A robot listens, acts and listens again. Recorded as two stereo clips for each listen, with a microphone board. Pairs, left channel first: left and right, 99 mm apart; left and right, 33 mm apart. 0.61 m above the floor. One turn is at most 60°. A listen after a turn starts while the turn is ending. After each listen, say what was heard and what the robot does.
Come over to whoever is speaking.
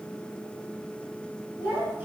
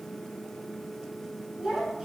The child speaking: about 20° right or 160° right. Turn 20° right.
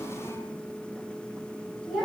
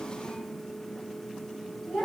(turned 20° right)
Drive 1.0 m forward.
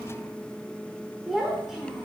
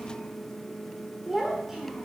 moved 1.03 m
Drive 1.0 m forward.
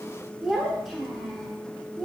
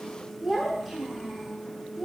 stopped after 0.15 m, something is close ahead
I am next to the child speaking.